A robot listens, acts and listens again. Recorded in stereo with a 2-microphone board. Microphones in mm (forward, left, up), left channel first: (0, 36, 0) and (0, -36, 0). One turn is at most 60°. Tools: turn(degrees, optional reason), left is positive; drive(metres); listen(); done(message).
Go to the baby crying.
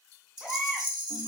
turn(degrees=30)
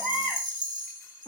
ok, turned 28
turn(degrees=-25, reason="So it is at 25° right.")
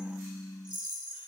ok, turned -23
listen()
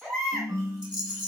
drive(metres=1.0)
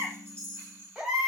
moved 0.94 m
turn(degrees=-10, reason="The baby crying is now 10° right.")
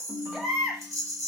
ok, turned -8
drive(metres=1.0)
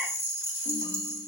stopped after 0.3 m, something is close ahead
listen()
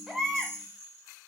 done("Arrived at the baby crying, straight ahead.")